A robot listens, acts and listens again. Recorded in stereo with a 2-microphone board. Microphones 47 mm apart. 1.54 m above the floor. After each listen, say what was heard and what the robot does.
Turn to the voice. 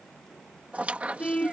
Keep listening.
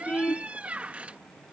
Keep listening.
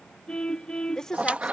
Turn 30° left.
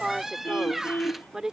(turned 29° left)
So it is at 15° right. Turn 15° right.
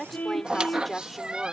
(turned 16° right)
Facing the woman speaking.